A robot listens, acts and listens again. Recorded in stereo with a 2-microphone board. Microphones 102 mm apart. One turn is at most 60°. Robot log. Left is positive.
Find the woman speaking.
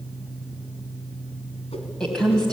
cmd yaw +30
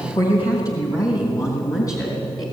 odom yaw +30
note: So it is at 145° left.
cmd yaw +60
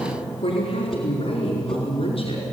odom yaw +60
note: The woman speaking is now 80° left.
cmd yaw +60
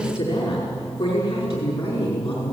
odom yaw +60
note: The woman speaking is now 30° left.
cmd yaw +30
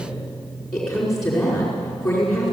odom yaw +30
end: Facing the woman speaking.